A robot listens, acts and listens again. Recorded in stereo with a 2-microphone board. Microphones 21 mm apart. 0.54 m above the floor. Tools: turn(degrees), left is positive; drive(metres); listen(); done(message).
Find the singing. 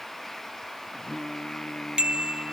turn(degrees=45)
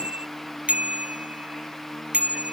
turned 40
turn(degrees=95)
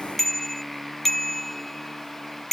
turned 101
done("Found it: singing, straight ahead.")